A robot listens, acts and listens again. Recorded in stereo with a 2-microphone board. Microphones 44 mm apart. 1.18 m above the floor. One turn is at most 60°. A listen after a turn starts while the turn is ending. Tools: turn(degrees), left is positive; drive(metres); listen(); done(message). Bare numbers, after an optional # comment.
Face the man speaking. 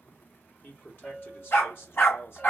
# The man speaking: about 65° left or 115° left.
turn(60)
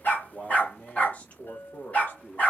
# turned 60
# So it is at 50° left.
turn(50)
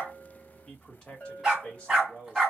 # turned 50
# The man speaking is now 25° left.
turn(25)
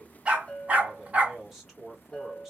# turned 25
done("Facing the man speaking, 2 to 4 m away.")